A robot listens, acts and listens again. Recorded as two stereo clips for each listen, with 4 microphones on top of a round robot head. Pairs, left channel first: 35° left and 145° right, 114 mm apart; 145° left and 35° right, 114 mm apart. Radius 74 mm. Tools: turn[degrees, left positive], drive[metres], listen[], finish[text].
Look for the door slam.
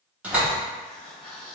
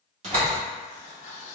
Thought: The door slam: 65° right.
Action: turn[-65]
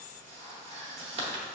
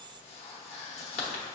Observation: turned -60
Action: finish[Facing where the door slam came from. I can't hear it now.]